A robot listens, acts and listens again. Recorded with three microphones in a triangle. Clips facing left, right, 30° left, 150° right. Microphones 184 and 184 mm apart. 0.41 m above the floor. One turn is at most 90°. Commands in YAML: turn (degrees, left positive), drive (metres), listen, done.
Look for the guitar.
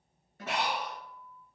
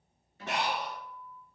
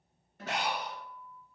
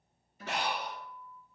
turn: 45
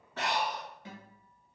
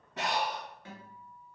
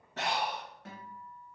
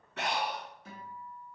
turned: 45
turn: 20
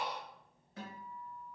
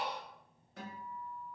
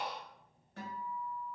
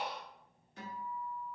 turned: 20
done: "Facing the guitar, 1 to 2 m away."